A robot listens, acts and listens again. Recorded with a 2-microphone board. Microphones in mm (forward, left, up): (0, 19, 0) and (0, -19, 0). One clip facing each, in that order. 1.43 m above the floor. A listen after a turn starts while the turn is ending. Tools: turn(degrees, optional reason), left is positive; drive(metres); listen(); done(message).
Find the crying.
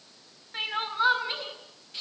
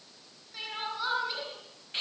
turn(degrees=35, reason="The crying: about 35° left or 145° left.")
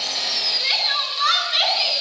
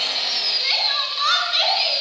done("Found it: crying, straight ahead.")